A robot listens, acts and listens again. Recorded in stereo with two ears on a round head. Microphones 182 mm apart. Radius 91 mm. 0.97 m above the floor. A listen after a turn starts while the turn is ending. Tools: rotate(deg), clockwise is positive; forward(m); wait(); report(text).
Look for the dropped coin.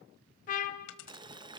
rotate(-65)
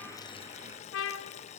wait()
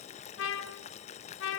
report("I heard a dropped coin, but can't make it out now. It was about straight ahead or 50° left.")